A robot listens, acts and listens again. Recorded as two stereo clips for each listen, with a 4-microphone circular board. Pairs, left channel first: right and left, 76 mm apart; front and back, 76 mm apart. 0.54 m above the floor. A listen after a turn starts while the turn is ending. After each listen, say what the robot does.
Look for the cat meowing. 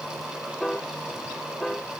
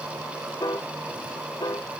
Keep listening.
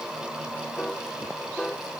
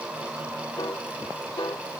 Keep listening.
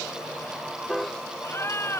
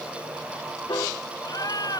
Turn 35° right.
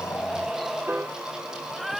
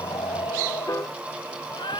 Facing the cat meowing.